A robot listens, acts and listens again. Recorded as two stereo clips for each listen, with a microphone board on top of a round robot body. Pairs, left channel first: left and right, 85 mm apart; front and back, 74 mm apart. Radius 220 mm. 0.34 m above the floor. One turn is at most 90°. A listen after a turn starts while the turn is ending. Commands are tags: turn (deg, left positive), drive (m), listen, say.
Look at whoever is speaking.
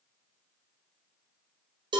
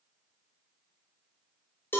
<listen/>
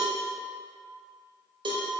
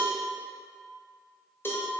<listen/>
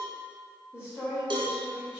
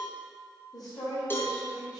<turn deg="25"/>
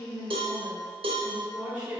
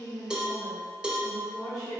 <turn deg="-10"/>
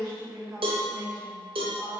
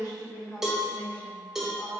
<say>Found it: a woman speaking, straight ahead, 1 to 2 m away.</say>